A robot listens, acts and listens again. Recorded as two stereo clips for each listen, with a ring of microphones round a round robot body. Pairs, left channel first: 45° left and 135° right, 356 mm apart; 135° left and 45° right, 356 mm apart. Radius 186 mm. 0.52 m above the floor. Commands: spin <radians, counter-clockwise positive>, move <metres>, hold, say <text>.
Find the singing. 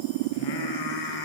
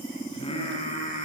spin 1.13
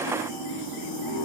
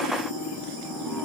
hold
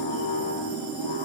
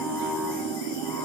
spin 0.87
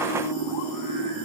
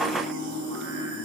spin 0.17
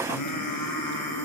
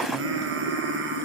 spin 0.26
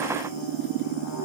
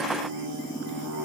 say Found it: singing, straight ahead.